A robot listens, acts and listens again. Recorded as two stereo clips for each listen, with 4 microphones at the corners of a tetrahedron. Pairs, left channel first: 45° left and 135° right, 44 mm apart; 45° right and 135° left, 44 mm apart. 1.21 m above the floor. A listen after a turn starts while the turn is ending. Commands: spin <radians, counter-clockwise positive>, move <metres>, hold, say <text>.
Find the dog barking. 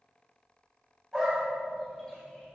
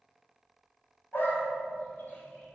spin -0.70
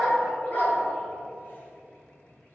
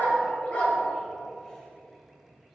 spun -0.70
spin 0.17
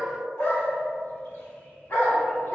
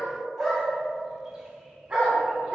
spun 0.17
spin 1.13
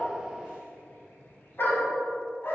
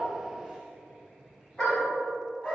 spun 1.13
spin 0.26
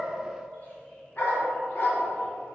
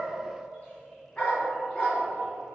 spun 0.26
say Found it: a dog barking, straight ahead.